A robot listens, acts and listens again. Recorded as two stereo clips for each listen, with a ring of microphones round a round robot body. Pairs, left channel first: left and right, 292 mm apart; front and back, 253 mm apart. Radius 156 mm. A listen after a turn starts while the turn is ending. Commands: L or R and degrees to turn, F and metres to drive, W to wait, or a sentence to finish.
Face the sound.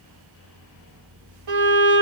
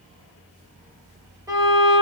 R100
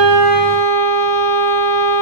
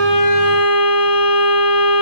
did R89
R10
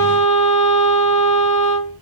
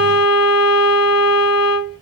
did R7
Facing the violin, 1 to 2 m away.